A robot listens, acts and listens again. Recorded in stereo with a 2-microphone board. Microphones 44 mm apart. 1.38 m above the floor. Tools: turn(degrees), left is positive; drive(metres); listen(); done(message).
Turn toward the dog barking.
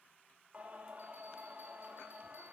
listen()
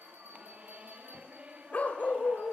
turn(degrees=40)
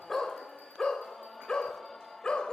turn(degrees=25)
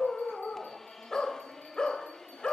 turn(degrees=20)
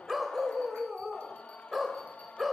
done("Found it: a dog barking, straight ahead.")